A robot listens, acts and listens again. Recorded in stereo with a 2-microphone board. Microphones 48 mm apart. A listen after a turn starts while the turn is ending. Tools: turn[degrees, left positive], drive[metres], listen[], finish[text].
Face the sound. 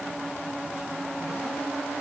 Action: listen[]
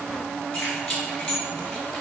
Thought: The keys jangling: about 20° left or 160° left.
Action: turn[20]
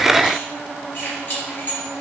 Thought: So it is at 140° left.
Action: turn[140]
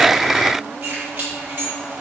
Thought: The keys jangling is now 45° right.
Action: turn[-45]
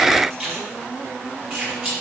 Thought: The keys jangling is now 20° right.
Action: turn[-20]
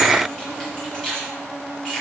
Action: finish[Found it: keys jangling, straight ahead.]